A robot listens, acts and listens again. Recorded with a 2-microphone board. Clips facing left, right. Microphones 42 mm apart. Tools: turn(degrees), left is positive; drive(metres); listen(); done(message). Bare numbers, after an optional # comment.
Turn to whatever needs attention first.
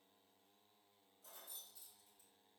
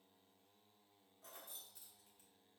listen()
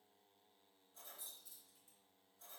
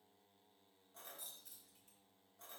listen()
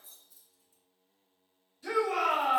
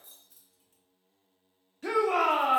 # The shout: about 55° right or 125° right.
turn(-55)
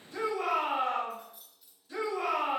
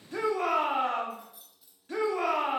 # So it is at 65° right.
turn(-65)
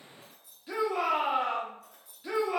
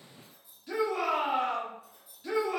# The shout is now 15° left.
turn(15)
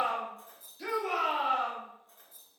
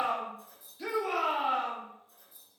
done("Found it: a shout, straight ahead, 2 to 4 m away.")